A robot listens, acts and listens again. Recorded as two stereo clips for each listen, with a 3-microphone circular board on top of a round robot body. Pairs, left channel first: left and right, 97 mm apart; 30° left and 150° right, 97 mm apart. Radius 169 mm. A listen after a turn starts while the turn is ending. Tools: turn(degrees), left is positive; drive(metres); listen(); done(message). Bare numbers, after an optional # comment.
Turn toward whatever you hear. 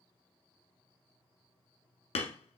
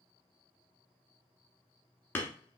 # The hammering: 105° left.
turn(105)
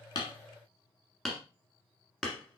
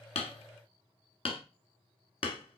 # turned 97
done("Facing the hammering.")